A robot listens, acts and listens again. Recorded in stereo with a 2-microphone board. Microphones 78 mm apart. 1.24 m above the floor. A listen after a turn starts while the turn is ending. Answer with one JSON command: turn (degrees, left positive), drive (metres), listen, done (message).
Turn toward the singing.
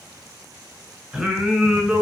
{"turn": -30}
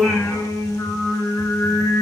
{"turn": 40}
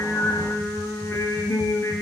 {"turn": 30}
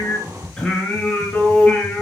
{"turn": 15}
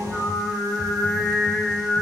{"done": "Facing the singing, over 4 m away."}